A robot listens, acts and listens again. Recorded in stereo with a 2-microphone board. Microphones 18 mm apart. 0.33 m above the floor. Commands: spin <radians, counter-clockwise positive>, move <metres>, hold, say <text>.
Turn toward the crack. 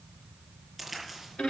spin 0.52
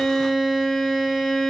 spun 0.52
hold
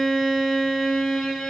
say I heard a crack, but can't make it out now. It was about 30° right or 150° left.